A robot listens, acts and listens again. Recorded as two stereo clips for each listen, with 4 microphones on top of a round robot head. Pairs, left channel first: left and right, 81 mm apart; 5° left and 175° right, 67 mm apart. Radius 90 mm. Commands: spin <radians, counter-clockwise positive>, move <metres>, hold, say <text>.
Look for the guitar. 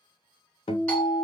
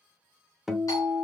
spin 1.75
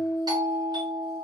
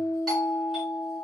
say Found it: a guitar, straight ahead, under 1 m away.